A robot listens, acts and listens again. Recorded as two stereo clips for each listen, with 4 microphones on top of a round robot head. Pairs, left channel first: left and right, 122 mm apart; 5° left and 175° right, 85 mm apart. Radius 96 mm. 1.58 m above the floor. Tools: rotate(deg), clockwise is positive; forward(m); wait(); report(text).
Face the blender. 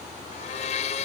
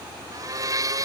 rotate(-135)
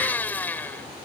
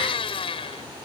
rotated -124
rotate(-15)
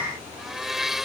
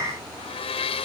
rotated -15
report("Found it: a blender, straight ahead.")